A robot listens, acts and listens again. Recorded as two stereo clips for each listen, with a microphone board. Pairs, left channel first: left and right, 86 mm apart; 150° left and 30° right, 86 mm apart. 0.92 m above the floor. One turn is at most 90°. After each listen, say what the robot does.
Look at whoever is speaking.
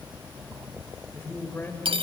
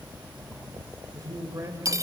Turn 25° left.
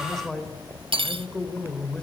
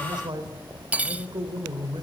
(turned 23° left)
Turn 10° left.
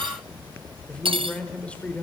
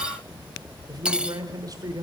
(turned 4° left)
Turn 15° left.
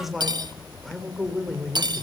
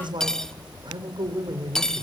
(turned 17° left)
Found it: a man speaking, straight ahead, 2 to 4 m away.